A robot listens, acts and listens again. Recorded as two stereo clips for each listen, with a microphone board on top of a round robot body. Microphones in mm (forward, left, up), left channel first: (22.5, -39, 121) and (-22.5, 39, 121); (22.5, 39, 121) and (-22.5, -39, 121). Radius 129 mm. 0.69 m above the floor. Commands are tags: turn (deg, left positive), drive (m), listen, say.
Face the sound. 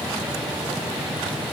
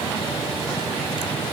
<listen/>
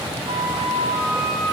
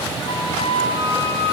<turn deg="95"/>
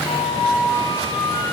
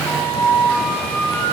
<turn deg="-15"/>
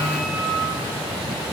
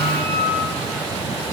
<say>Found it: a flute, straight ahead.</say>